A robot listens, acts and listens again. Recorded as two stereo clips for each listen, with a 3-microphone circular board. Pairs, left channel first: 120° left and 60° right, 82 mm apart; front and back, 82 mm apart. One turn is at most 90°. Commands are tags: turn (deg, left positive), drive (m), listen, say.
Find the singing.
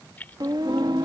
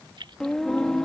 <turn deg="-80"/>
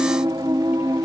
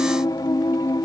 <turn deg="-30"/>
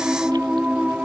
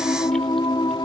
<turn deg="15"/>
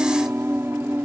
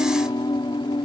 <say>Found it: singing, straight ahead.</say>